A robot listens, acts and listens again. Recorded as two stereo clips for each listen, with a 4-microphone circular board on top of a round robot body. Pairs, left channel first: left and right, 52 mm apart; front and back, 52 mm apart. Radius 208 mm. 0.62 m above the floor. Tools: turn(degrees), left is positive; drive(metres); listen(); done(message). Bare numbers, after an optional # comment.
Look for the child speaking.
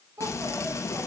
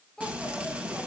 # The child speaking: 80° right.
turn(-80)
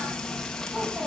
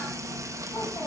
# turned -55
# Nothing new. It was at 25° right.
turn(-25)
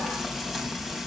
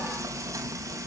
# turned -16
listen()
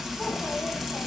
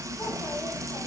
done("Facing where the child speaking came from. I can't hear it now.")